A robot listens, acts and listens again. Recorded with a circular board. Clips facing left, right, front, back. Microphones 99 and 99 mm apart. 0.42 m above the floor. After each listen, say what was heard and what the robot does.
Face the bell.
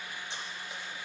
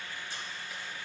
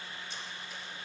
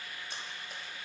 Keep listening.
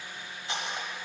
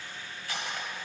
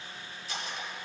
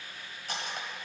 Keep listening.
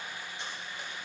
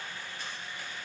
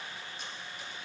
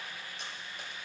I can't make out a bell, only cutlery clinking.